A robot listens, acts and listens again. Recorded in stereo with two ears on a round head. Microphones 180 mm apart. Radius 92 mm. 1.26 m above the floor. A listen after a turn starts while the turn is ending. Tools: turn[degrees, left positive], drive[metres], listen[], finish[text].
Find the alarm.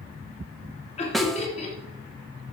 Action: listen[]
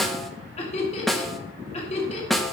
Action: listen[]
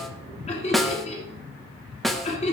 Action: finish[I can't make out an alarm to turn to.]